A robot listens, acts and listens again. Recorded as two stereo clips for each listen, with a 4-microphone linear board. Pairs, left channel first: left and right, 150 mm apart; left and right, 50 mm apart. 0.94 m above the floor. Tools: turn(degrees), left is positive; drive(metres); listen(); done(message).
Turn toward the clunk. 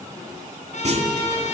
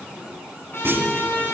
turn(degrees=-50)
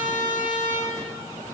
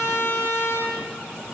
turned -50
listen()
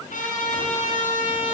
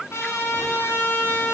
done("I heard a clunk, but can't make it out now. It was about straight ahead or 80° right.")